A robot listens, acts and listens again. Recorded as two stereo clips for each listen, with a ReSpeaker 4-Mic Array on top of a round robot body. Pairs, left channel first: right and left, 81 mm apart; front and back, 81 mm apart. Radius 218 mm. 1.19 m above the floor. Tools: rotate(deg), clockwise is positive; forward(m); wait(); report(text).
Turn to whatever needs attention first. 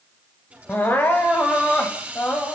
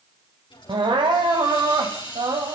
rotate(155)
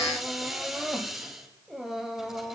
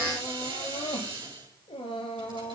report("Found it: crying, straight ahead.")